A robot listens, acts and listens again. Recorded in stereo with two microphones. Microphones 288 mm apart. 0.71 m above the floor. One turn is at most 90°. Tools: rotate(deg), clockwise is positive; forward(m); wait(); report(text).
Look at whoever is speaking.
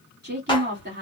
rotate(35)
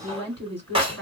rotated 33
rotate(90)
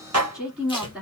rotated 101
report("Facing the woman speaking, 2 to 4 m away.")